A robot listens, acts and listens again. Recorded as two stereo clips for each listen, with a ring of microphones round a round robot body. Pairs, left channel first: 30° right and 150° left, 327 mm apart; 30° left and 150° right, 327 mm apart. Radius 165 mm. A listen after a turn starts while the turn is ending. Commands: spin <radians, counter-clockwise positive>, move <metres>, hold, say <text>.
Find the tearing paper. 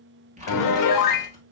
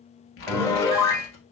spin 1.40
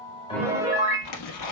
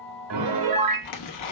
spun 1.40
say Facing the tearing paper, 1 to 2 m away.